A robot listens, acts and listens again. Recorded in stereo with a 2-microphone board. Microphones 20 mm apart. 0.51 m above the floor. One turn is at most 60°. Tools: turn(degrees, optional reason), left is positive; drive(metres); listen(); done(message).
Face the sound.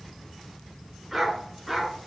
turn(degrees=30)
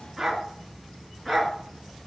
turn(degrees=30)
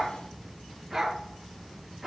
turn(degrees=-30)
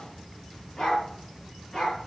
turn(degrees=35, reason="So it is at 35° left.")
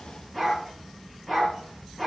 turn(degrees=10, reason="The dog barking is now 10° left.")
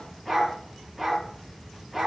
done("Facing the dog barking, 2 to 4 m away.")